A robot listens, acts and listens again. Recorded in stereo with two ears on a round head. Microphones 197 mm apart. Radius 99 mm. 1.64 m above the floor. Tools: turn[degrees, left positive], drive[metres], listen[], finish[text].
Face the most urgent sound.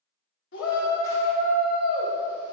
Thought: The shout: about 55° left or 125° left.
Action: turn[55]
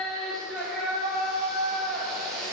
Action: finish[Facing the shout.]